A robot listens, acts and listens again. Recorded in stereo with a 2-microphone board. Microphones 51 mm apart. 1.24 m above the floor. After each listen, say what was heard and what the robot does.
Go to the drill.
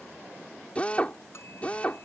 The drill: about 25° left or 155° left. Turn 25° left.
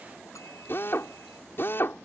So it is at 135° left. Turn 135° left.
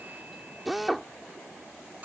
Drive 1.0 m forward.
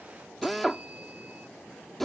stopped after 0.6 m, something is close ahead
Blocked. The drill is further on, straight ahead.